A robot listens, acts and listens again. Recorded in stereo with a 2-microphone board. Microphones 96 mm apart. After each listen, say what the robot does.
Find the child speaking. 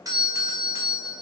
Keep listening.
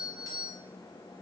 Keep listening.
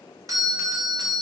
I can't make out a child speaking, only a doorbell.